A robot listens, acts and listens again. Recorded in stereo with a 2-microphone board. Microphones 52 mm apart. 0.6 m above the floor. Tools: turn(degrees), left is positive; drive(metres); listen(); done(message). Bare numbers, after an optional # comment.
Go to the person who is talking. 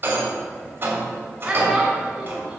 turn(-30)
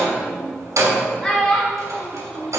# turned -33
# So it is at 20° left.
turn(20)
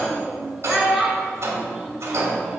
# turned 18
drive(1.0)
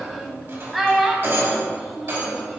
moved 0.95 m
drive(1.0)
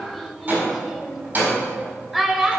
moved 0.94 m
drive(1.0)
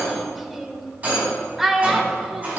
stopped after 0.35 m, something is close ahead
done("I am next to the child speaking.")